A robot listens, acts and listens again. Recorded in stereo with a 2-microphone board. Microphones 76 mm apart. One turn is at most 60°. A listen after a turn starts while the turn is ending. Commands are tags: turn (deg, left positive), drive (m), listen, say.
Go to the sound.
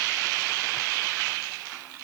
<listen/>
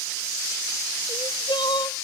<turn deg="60"/>
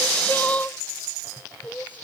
<turn deg="25"/>
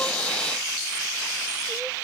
<listen/>
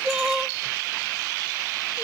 <turn deg="-10"/>
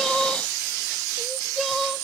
<drive m="1.0"/>
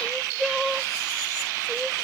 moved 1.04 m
<drive m="1.0"/>
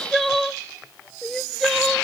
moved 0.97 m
<drive m="1.0"/>
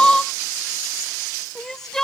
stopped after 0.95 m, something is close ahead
<say>I am next to the crying.</say>